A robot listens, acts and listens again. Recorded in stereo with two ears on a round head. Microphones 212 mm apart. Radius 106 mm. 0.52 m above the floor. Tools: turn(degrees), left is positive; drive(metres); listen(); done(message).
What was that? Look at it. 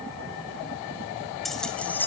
turn(degrees=30)
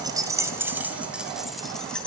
turn(degrees=30)
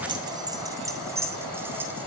turn(degrees=-10)
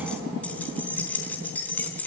done("Found it: keys jangling, straight ahead, 2 to 4 m away.")